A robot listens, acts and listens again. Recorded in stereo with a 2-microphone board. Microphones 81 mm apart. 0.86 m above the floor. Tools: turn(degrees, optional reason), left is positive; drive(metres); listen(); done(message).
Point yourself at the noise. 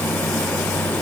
listen()
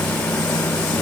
listen()
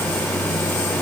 done("I can't make out anything to turn to.")